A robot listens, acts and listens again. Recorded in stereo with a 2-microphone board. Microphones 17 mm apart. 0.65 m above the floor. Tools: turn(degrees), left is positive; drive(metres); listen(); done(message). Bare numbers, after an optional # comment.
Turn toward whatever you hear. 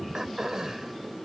# The throat clearing: about 45° right or 135° right.
turn(-45)
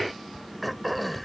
done("Found it: throat clearing, straight ahead.")